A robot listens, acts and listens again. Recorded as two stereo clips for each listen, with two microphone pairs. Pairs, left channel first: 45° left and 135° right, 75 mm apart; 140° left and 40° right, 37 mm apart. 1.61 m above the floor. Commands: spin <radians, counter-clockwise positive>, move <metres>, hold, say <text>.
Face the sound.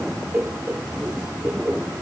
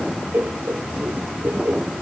spin -1.22
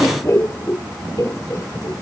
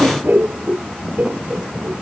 say Facing the laughter.